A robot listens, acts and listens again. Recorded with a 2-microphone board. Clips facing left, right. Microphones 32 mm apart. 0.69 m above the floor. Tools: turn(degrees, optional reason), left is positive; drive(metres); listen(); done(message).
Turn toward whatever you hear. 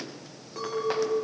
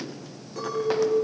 turn(degrees=30)
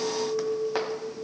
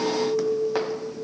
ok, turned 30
turn(degrees=-15, reason="So it is at 15° right.")
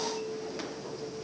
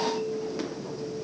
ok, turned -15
done("Facing the clink.")